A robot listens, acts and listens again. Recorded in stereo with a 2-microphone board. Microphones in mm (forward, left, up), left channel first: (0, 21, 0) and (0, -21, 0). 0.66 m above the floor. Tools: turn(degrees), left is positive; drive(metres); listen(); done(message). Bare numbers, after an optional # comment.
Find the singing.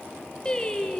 # The singing: about 25° left or 155° left.
turn(25)
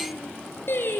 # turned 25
# So it is at 115° left.
turn(115)
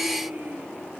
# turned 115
# The singing is now 45° right.
turn(-45)
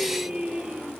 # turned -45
# The singing is now 25° right.
turn(-25)
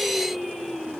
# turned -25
done("Found it: singing, straight ahead, 2 to 4 m away.")